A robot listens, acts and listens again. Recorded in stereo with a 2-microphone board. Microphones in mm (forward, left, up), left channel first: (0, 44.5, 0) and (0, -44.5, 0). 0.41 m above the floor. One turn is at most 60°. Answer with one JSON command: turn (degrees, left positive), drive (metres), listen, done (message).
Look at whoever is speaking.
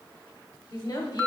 {"turn": 55}
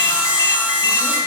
{"listen": true}
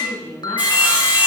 {"turn": 25}
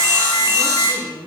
{"turn": -10}
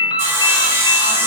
{"listen": true}
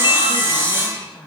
{"done": "Facing the woman speaking, over 4 m away."}